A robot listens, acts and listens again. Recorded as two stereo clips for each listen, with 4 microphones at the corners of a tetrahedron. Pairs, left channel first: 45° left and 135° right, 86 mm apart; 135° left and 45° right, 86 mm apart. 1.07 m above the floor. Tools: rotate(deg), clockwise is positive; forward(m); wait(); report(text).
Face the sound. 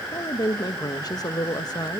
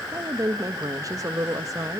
report("Found it: a woman speaking, straight ahead, 1 to 2 m away.")